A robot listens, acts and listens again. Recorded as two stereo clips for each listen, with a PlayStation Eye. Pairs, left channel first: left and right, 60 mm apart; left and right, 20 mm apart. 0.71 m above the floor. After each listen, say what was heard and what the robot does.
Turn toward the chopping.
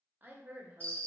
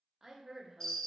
Keep listening.
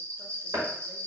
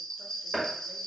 Turn 90° right.
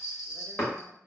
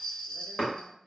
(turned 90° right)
So it is at 15° left. Turn 15° left.
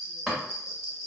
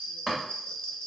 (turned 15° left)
Found it: chopping, straight ahead.